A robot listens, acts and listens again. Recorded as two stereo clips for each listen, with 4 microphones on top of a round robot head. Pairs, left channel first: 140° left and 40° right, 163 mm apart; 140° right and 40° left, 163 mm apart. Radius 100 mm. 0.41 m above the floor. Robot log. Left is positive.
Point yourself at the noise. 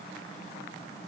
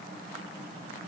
cmd idle
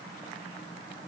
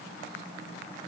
cmd idle
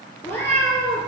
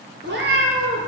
note: The cat meowing: 55° left.
cmd yaw +55
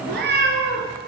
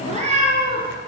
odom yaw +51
note: The cat meowing is now 20° right.
cmd yaw -20
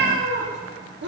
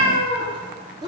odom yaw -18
note: The cat meowing is now 30° right.
cmd yaw -30
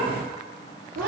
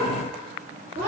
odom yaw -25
note: The cat meowing is now 15° right.
cmd yaw -15
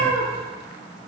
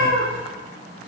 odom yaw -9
end: Found it: a cat meowing, straight ahead.